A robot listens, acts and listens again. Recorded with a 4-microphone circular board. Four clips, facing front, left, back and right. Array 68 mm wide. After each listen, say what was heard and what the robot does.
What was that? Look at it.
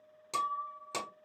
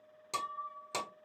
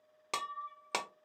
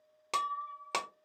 The breaking glass: 135° right. Turn 135° right.
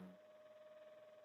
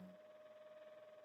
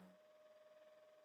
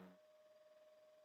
I heard breaking glass from this way, but can't make it out now.